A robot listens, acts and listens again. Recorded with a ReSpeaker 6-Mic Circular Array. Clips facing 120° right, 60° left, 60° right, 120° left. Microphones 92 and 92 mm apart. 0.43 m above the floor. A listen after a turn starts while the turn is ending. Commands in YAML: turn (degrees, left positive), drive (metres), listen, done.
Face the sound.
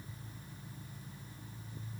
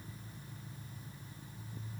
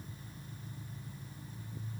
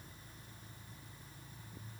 listen: true
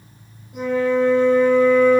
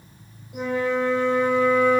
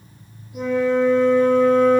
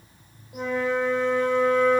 turn: 135
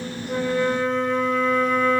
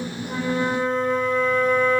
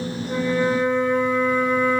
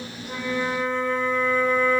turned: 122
turn: 15
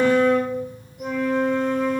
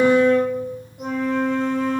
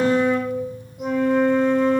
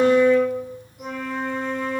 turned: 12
done: "Found it: a flute, straight ahead."